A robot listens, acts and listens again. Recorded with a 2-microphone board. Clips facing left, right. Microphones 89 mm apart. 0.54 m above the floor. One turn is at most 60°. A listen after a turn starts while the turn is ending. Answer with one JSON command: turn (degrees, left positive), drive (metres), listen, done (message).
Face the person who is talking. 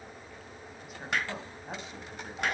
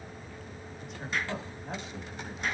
{"turn": 30}
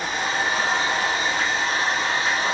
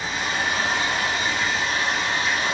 {"listen": true}
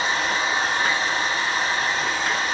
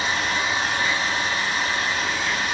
{"listen": true}
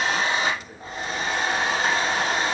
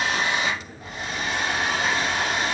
{"done": "I heard a woman speaking, but can't make it out now. It was about 25° right or 145° left."}